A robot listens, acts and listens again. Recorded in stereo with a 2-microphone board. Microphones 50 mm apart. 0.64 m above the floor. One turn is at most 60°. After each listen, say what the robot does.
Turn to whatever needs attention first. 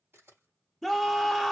Turn 30° left.
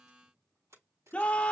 Turn 60° left.
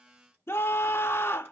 Turn 60° left.
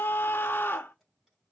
Turn 55° left.
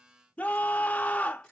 Turn 35° left.
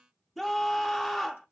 Facing the scream, 1 to 2 m away.